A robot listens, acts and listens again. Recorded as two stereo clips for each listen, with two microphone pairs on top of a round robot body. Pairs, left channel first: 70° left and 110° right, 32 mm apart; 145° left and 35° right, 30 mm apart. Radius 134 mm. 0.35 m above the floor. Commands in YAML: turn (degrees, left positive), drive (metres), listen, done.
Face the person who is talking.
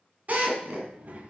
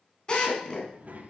turn: -70
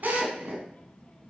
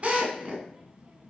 turn: 15
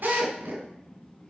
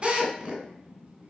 done: "Facing the child speaking, 2 to 4 m away."